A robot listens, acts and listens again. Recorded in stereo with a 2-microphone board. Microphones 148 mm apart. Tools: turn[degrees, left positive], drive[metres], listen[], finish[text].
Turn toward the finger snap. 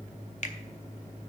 Thought: The finger snap: about 55° left or 125° left.
Action: turn[55]
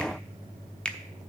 Thought: So it is at 10° left.
Action: turn[10]
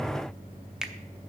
Action: finish[Facing the finger snap.]